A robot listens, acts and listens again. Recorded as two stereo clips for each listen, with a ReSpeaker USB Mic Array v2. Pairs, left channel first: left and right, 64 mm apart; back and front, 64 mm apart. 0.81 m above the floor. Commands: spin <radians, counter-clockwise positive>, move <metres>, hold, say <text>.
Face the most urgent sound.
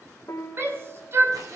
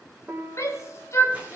spin -2.44
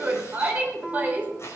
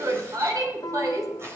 spin -0.44
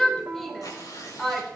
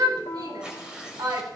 say Facing the shout, 2 to 4 m away.